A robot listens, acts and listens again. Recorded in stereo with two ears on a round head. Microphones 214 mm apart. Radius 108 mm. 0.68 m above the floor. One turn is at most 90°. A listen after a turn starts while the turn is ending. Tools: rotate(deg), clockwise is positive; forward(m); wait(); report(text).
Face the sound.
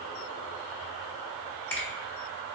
rotate(-30)
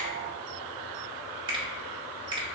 rotate(20)
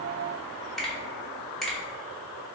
report("Found it: a finger snap, straight ahead.")